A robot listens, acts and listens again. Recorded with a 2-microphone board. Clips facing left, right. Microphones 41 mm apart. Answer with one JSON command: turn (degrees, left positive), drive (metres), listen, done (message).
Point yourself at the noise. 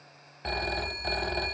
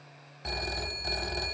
{"turn": 20}
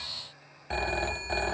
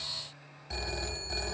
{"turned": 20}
{"turn": 140}
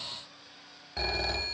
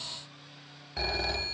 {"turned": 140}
{"done": "Facing the phone ringing, 1 to 2 m away."}